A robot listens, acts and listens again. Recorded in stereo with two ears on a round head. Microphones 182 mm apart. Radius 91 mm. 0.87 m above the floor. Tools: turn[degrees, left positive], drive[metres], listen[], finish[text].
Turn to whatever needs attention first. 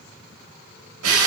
Action: listen[]
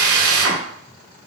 Action: listen[]
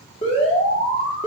Thought: The alarm: about 30° left or 150° left.
Action: turn[30]
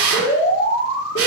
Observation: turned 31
Thought: So it is at 120° left.
Action: turn[120]
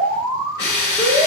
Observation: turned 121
Action: finish[Facing the alarm, 2 to 4 m away.]